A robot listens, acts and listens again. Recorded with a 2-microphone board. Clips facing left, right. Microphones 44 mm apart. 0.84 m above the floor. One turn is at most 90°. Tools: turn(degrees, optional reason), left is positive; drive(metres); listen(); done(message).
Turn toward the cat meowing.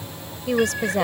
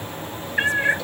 turn(degrees=-35, reason="The cat meowing: about 35° right or 145° right.")
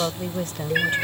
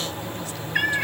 done("Facing the cat meowing.")